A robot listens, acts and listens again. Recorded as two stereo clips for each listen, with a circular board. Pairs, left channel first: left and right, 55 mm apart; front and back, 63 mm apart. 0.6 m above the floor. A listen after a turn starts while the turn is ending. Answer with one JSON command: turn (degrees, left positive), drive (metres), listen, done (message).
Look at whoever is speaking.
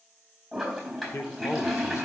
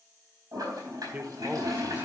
{"turn": 120}
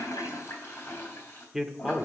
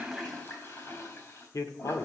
{"turn": -10}
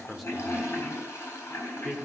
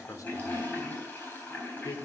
{"done": "Found it: a man speaking, straight ahead, 1 to 2 m away."}